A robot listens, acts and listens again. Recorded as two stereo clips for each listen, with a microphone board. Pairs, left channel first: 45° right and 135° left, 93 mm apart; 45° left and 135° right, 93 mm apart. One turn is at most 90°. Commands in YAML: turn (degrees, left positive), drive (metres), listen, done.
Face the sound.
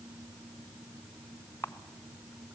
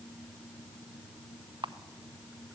turn: -90
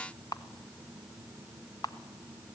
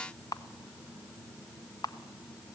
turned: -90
done: "Found it: a camera shutter, straight ahead."